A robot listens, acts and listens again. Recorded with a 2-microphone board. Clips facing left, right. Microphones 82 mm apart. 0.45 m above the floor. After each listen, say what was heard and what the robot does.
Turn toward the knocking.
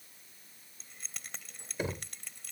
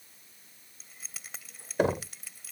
The knocking: about 65° right or 115° right. Turn 65° right.
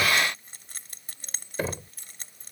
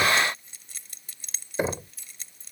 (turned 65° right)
So it is at 20° right. Turn 20° right.
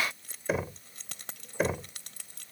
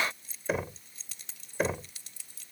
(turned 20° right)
Found it: knocking, straight ahead.